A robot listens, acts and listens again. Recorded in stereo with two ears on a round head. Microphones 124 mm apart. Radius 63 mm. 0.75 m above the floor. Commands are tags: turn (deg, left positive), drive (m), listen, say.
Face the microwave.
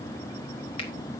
<listen/>
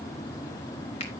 <listen/>
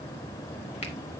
<say>I can't make out a microwave.</say>